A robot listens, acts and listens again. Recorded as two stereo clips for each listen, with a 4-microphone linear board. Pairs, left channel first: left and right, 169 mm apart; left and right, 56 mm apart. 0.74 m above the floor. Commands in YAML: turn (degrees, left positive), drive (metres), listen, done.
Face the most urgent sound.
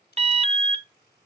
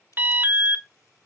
turn: -40
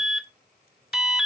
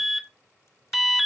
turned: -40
done: "Facing the alarm."